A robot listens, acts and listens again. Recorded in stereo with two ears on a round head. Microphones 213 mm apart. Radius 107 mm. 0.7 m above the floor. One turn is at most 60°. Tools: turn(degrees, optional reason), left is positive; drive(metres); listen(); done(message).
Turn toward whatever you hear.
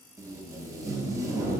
turn(degrees=-30)
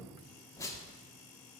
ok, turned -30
turn(degrees=15, reason="So it is at 15° left.")
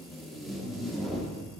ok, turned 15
done("Found it: tape being pulled, straight ahead, under 1 m away.")